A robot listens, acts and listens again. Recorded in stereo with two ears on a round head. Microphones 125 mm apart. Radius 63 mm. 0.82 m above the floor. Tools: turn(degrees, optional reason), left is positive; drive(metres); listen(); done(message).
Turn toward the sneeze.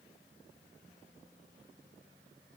listen()
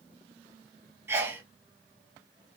turn(degrees=-15, reason="The sneeze: about 15° right or 165° right.")
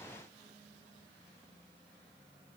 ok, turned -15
listen()
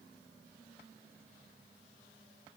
done("I heard a sneeze, but can't make it out now. It was about straight ahead or 150° right.")